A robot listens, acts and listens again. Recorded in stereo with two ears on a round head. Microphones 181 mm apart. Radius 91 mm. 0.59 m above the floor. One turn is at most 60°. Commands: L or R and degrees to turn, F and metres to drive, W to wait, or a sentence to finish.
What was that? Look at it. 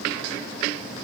W
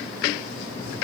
W
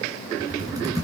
R20
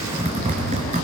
R60
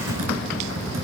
R60
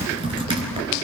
R25
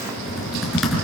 Found it: typing on a keyboard, straight ahead.